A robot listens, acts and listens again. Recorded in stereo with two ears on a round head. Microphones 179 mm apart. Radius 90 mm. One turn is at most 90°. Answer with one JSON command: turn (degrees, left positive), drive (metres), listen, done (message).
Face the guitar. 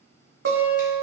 {"turn": -60}
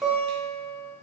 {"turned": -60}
{"done": "Facing the guitar, 1 to 2 m away."}